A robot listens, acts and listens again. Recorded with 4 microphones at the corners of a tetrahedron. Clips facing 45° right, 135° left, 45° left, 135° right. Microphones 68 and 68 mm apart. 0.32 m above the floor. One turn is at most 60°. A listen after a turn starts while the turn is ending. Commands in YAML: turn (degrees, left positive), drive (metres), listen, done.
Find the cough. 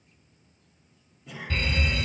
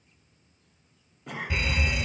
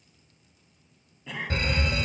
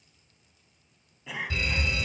turn: 60
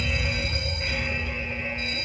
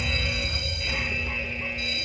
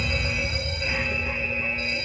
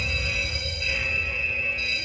turn: 60
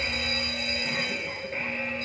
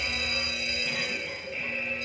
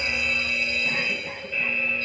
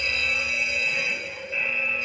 turn: 20
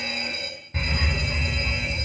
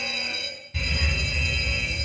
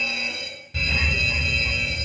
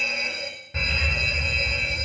done: "I heard a cough from this way, but can't make it out now."